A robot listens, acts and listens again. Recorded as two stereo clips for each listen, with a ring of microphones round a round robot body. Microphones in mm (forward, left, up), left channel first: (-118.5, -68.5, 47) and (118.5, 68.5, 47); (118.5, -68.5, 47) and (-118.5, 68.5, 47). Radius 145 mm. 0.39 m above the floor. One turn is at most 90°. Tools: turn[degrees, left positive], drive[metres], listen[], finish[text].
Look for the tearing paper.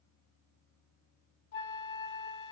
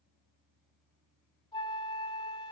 Action: listen[]
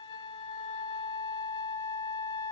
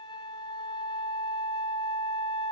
Action: listen[]
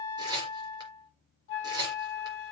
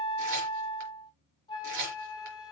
Thought: The tearing paper: 105° left.
Action: turn[90]
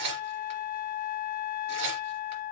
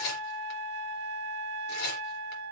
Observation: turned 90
Action: finish[Facing the tearing paper.]